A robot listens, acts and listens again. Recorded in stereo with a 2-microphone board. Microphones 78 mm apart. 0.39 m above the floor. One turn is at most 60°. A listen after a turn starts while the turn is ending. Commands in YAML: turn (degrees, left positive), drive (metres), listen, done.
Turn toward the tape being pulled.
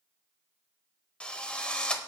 listen: true
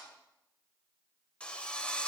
listen: true
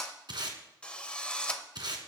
turn: -60
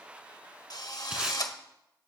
listen: true
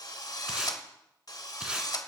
listen: true
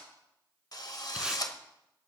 done: "I heard tape being pulled, but can't make it out now. It was about 15° right or 45° right."